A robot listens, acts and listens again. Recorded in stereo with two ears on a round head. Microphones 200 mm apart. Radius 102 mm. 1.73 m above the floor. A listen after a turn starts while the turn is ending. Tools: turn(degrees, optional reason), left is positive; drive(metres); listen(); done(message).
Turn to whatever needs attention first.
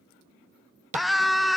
turn(degrees=30)
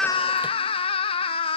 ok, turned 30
turn(degrees=150, reason="So it is at 150° left.")
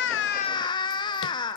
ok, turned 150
turn(degrees=25, reason="The scream is now 25° left.")
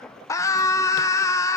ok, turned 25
turn(degrees=15, reason="The scream is now 15° left.")
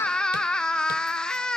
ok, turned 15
done("Found it: a scream, straight ahead.")